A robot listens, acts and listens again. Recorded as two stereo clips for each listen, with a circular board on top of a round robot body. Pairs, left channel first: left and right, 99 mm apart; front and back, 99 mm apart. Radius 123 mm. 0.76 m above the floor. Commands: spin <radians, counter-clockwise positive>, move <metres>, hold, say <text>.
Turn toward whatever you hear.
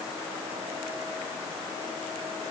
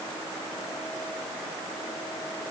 hold
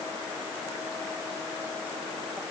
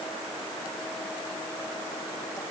hold
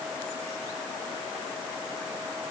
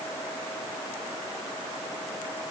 say I can't make out anything.